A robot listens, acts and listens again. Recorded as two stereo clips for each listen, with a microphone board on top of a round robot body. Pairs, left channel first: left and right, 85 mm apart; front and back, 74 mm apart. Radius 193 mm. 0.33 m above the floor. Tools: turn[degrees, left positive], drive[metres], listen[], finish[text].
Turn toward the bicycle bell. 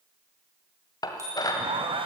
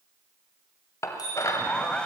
Thought: The bicycle bell: 35° right.
Action: turn[-35]
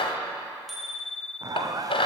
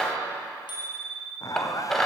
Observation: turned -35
Action: finish[Found it: a bicycle bell, straight ahead.]